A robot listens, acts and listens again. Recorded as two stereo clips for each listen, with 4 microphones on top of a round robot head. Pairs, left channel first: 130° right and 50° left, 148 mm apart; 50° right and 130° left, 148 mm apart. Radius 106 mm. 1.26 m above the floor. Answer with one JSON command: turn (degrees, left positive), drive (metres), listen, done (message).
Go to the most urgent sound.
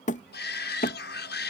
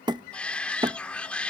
{"turn": -135}
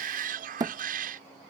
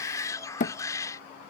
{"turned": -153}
{"turn": 20}
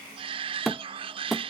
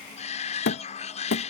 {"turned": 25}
{"drive": 1.0}
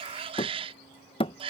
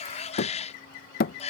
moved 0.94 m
{"drive": 1.0}
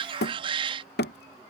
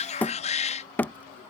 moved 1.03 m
{"drive": 1.0}
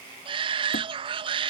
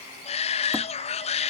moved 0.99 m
{"drive": 1.0}
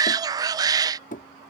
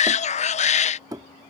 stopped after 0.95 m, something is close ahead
{"turn": -15}
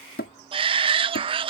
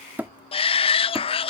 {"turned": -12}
{"done": "Arrived at the shout, straight ahead."}